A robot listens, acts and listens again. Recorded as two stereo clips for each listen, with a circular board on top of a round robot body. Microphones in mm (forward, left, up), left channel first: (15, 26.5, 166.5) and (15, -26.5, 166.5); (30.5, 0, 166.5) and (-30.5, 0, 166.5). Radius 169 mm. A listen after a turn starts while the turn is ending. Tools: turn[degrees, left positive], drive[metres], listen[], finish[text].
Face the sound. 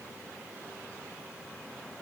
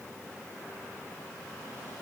Action: listen[]
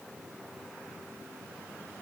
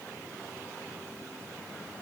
Action: listen[]
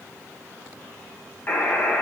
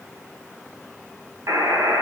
Thought: The buzzer: 145° left.
Action: turn[145]
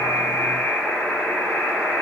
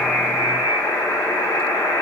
Thought: The buzzer is now 25° left.
Action: turn[25]
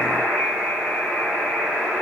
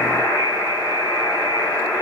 Thought: The buzzer is now 15° left.
Action: turn[15]
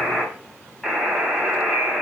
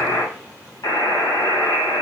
Action: finish[Found it: a buzzer, straight ahead.]